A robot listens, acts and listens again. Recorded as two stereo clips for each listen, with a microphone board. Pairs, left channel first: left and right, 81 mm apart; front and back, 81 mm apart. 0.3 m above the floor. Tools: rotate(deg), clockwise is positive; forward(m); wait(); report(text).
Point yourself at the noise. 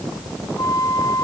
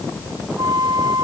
rotate(-140)
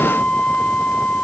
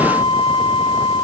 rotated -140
rotate(-15)
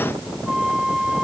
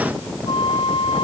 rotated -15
report("Found it: a flute, straight ahead.")